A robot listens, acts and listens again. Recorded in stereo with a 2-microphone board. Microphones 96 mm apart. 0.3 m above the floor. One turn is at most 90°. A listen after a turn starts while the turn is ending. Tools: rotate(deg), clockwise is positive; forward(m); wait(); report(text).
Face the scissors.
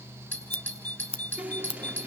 rotate(-90)
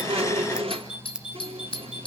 rotate(10)
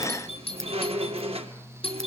wait()
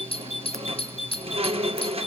wait()
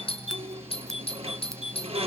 report("I heard scissors from this way, but can't make it out now.")